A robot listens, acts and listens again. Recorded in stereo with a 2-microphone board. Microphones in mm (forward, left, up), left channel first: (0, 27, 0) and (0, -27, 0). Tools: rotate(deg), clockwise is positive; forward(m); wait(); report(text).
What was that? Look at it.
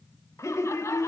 rotate(-65)
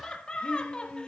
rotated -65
rotate(-20)
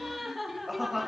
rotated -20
report("Found it: laughter, straight ahead.")